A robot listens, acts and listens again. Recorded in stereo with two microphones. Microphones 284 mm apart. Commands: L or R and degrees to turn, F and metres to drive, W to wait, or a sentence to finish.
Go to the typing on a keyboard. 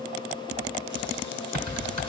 L90
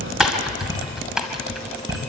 F1.0
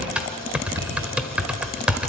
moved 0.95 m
F1.0
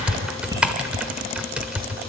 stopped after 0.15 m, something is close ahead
Arrived at the typing on a keyboard, straight ahead.